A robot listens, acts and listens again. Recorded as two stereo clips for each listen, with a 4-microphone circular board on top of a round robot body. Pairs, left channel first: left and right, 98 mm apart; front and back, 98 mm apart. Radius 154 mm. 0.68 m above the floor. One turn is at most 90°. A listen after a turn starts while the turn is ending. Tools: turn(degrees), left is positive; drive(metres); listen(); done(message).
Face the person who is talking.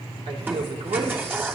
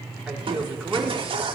turn(degrees=-90)
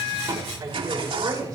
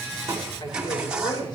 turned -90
turn(degrees=-40)
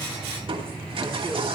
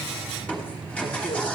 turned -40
listen()
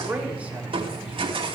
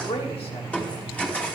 turn(degrees=-15)
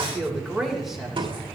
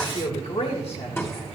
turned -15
done("Facing the man speaking.")